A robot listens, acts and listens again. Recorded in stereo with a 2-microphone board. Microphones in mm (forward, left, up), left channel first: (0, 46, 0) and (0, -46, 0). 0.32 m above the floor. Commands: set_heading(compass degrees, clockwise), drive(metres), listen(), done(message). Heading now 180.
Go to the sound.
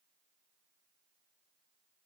listen()
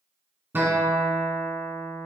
set_heading(205)
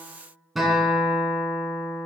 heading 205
drive(1.0)
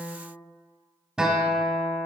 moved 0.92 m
set_heading(215)
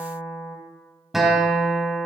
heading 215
drive(1.0)
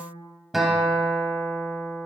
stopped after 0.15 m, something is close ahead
done("Arrived at the guitar, straight ahead.")